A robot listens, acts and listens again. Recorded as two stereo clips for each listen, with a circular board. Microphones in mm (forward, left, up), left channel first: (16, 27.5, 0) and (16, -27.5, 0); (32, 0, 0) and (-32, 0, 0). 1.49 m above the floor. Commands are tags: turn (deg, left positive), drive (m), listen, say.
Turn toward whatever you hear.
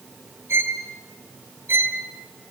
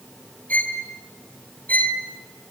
<turn deg="-60"/>
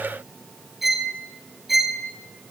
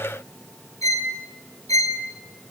<say>Found it: a violin, straight ahead.</say>